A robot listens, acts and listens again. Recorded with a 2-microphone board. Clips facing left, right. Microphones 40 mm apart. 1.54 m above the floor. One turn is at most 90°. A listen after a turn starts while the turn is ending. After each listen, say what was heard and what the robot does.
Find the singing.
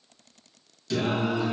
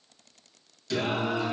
Turn 30° left.
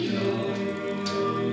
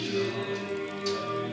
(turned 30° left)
So it is at 120° left. Turn 90° left.
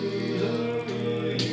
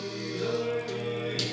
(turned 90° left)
The singing is now 10° left. Turn 10° left.
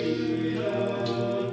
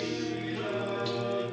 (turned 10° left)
The singing is now 10° right. Turn 10° right.
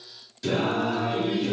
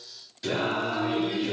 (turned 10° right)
The singing is now 10° right. Turn 10° right.
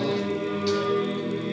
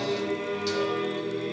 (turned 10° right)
Facing the singing.